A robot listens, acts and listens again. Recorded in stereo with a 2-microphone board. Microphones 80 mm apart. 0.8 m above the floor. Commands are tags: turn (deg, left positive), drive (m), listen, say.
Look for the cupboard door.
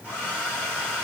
<listen/>
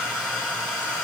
<listen/>
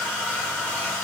<say>I can't make out a cupboard door to turn to.</say>